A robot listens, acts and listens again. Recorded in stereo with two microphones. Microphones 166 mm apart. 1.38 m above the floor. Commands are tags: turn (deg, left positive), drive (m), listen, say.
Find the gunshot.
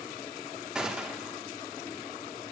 <turn deg="-30"/>
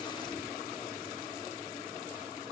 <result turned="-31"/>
<listen/>
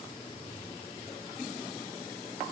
<say>I heard a gunshot, but can't make it out now. It was about 25° left or 145° right.</say>